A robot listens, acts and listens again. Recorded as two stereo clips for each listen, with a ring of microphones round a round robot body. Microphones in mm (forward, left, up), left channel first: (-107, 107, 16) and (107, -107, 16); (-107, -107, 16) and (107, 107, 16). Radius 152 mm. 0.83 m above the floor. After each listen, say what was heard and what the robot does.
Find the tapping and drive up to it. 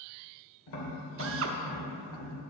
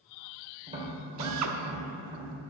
The tapping: 115° left. Turn 115° left.
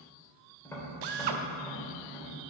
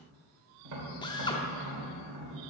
The tapping is now 55° left. Turn 55° left.
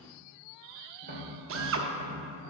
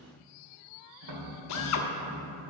The tapping is now 15° left. Turn 15° left.
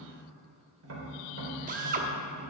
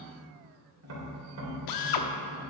Drive 1.0 m forward.
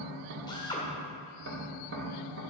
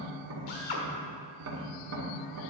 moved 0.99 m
Drive 1.0 m forward.
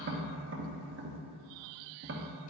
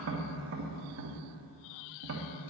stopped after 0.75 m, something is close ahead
I am next to the tapping.